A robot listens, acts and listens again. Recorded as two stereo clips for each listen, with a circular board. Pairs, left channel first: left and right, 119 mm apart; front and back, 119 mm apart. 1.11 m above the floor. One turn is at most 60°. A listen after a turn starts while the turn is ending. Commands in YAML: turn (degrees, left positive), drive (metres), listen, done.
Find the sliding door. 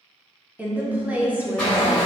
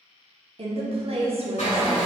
turn: 15
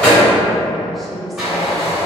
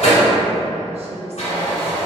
done: "Facing the sliding door."